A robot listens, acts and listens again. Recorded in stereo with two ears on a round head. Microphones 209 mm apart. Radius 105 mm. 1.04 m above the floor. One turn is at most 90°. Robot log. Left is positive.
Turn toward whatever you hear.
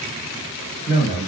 note: The man speaking: about 30° left or 150° left.
cmd yaw +30
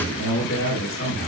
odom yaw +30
note: So it is at 120° left.
cmd yaw +90
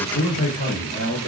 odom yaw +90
note: The man speaking is now 25° left.
cmd yaw +25
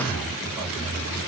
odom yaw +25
end: Found it: a man speaking, straight ahead.